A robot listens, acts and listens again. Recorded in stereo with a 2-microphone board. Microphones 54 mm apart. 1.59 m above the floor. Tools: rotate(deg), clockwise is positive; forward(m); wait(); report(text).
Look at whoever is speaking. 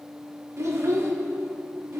rotate(60)
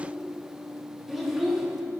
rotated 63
report("Facing the child speaking, 1 to 2 m away.")